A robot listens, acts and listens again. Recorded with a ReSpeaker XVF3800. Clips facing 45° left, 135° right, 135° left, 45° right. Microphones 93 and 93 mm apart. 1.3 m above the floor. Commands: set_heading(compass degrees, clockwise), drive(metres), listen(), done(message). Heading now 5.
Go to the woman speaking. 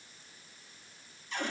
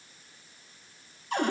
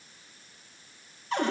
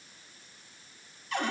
listen()
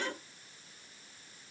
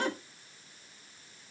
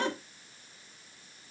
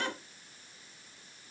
listen()
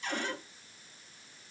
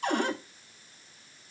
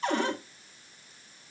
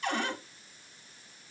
done("I can't make out a woman speaking to turn to.")